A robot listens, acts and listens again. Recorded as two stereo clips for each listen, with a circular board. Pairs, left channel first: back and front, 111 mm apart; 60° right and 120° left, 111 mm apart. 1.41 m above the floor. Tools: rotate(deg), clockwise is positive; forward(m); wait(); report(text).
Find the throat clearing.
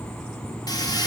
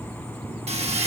wait()
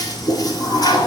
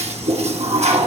wait()
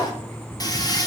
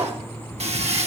report("I can't make out throat clearing to turn to.")